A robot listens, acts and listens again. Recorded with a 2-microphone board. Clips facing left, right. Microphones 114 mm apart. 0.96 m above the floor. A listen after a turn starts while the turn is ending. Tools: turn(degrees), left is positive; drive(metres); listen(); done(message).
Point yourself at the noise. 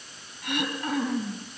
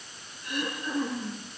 turn(degrees=90)
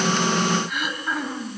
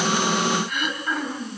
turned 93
done("Found it: throat clearing, straight ahead.")